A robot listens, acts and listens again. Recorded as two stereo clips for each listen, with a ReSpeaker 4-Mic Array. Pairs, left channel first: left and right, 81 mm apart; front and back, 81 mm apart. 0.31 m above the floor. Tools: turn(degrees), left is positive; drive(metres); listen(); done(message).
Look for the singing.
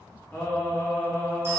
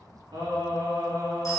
turn(degrees=155)
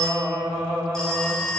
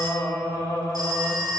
done("Facing the singing.")